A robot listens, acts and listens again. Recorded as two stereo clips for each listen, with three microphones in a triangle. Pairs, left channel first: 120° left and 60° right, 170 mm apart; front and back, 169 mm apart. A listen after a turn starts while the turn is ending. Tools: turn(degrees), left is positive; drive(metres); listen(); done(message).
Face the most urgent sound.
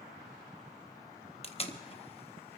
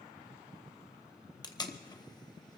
listen()
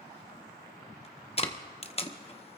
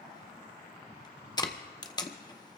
listen()
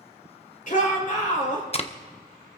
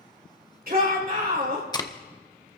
turn(degrees=155)
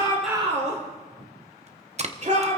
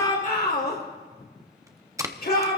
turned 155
turn(degrees=-15)
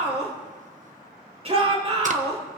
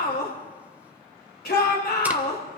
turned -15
turn(degrees=-10)
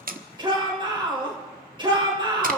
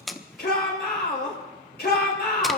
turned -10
done("Found it: a shout, straight ahead.")